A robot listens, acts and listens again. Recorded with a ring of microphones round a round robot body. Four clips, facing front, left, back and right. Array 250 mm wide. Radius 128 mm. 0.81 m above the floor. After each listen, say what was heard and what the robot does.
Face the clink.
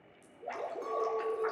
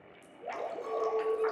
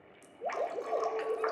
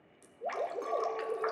The clink: 90° right. Turn 90° right.
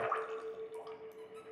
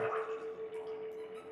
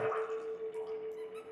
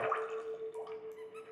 Found it: a clink, straight ahead.